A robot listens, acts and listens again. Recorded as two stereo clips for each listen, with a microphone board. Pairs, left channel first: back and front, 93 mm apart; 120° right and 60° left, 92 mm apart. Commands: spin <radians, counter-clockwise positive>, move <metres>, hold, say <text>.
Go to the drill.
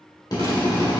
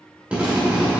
spin 2.36
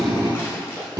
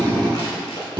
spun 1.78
spin 0.61
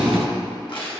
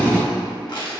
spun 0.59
move 1.0
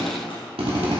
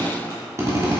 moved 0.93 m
move 1.0
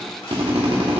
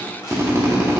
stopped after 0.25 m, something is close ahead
say Arrived at the drill, straight ahead.